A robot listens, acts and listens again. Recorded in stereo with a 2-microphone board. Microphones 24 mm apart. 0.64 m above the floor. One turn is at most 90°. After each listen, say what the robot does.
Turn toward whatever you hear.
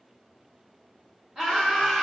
Turn 30° right.
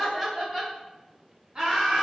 Turn 30° right.
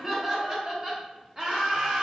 Turn 35° right.
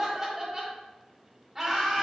Turn 15° right.
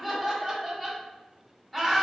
Facing the laughter.